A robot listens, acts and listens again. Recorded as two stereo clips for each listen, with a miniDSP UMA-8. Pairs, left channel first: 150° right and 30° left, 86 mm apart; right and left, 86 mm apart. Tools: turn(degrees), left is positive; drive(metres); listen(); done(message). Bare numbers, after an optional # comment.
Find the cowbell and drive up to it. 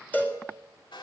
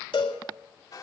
# The cowbell: 80° right.
turn(-80)
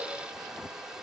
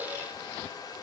listen()
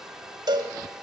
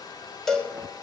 drive(1.0)
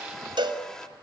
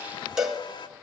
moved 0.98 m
drive(1.0)
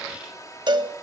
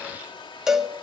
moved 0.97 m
drive(1.0)
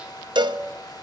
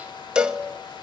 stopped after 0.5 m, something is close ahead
# The cowbell is now 10° left.
turn(10)
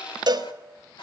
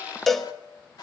done("Arrived at the cowbell, straight ahead.")